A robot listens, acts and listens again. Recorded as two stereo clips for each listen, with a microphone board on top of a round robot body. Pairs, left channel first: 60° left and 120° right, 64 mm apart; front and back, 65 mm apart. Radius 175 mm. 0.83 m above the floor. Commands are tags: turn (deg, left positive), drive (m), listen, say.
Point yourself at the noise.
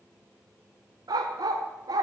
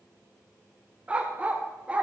<turn deg="-110"/>
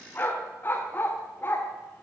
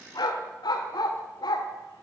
<say>Found it: a dog barking, straight ahead.</say>